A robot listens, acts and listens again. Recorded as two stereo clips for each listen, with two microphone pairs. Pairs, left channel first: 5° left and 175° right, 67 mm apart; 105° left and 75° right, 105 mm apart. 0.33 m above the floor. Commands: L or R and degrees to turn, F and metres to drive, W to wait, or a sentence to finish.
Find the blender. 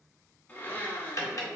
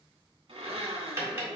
R55
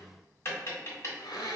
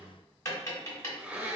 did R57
Found it: a blender, straight ahead.